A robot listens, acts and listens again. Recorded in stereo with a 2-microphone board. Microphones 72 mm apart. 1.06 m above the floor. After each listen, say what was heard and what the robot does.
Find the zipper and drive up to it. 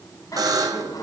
The zipper: about 55° left or 125° left. Turn 55° left.
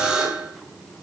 Keep listening.
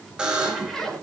Drive 1.0 m forward.
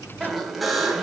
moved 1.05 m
Drive 1.0 m forward.
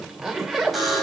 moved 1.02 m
Drive 1.0 m forward.
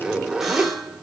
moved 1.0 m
The zipper is now 10° right. Turn 10° right.
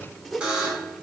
Drive 1.0 m forward.
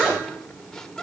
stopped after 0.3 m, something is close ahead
Keep listening.
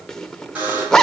The zipper is now 10° left. Turn 10° left.
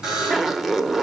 I am next to the zipper.